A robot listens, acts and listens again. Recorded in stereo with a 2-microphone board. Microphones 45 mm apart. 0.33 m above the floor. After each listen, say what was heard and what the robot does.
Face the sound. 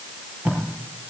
The tape being pulled: about 35° right or 145° right. Turn 35° right.
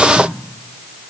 Keep listening.
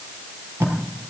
So it is at 110° right. Turn 110° right.
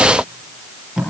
The tape being pulled is now 10° right. Turn 10° right.
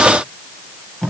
Facing the tape being pulled.